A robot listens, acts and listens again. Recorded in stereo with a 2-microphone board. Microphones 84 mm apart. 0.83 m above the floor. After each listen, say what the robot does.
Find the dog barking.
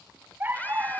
Turn 30° right.
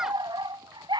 Turn 110° right.
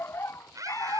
Turn 35° left.
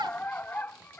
Turn 25° left.
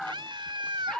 Turn 10° left.
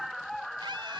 Found it: a dog barking, straight ahead.